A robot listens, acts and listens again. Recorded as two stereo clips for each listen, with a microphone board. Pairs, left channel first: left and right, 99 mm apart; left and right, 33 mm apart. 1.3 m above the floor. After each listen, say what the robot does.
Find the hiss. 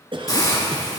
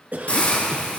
Turn 40° left.
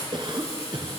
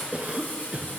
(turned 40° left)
Turn 100° left.
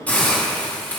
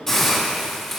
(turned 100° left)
Turn 15° left.
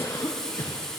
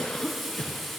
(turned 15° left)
Facing the hiss.